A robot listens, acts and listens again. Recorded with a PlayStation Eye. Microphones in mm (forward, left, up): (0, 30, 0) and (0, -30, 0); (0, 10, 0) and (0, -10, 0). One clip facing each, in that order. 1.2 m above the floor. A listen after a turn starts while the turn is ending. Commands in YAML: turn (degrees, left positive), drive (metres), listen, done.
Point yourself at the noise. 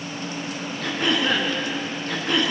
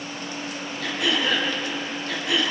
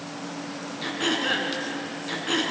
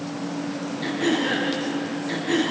turn: 45
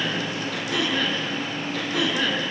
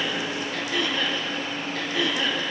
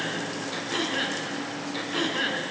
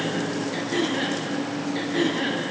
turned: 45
turn: 95
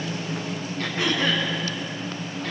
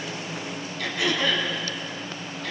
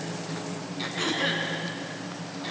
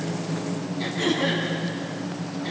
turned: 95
turn: 35
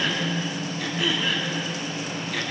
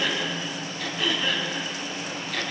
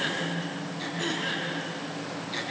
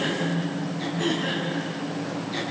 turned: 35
done: "Facing the throat clearing, over 4 m away."